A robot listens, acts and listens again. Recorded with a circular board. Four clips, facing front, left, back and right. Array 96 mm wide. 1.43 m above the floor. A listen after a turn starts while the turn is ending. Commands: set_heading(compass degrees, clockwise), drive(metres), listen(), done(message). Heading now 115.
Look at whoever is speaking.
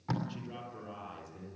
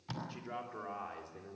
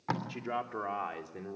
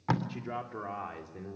set_heading(280)
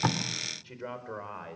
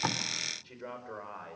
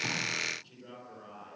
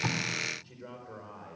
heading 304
set_heading(284)
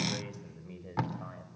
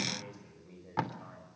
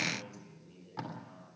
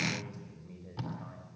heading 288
done("Found it: a man speaking, straight ahead.")